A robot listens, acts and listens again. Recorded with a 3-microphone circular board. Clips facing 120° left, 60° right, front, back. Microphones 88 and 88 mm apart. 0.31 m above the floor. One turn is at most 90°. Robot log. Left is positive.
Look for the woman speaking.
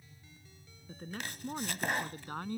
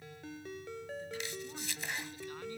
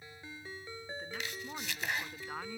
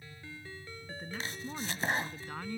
note: The woman speaking: 85° left.
cmd yaw +85
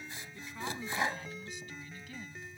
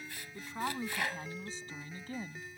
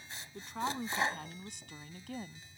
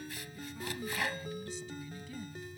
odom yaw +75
note: The woman speaking is now 15° right.
cmd yaw -15
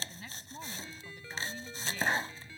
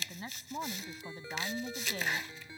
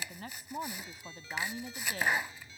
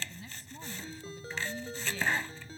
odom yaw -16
note: The woman speaking is now 30° right.
cmd yaw -30
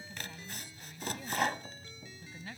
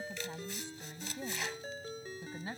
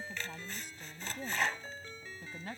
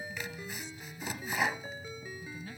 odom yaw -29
end: Found it: a woman speaking, straight ahead.